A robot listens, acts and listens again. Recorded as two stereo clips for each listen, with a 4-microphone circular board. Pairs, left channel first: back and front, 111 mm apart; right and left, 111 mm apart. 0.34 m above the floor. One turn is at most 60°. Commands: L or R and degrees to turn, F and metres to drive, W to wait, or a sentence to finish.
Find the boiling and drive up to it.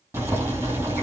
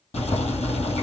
R60
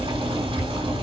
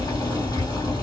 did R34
R35
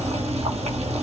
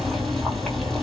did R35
F1.0
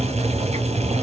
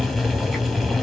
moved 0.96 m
F1.0
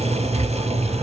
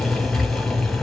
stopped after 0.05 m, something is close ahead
I am next to the boiling.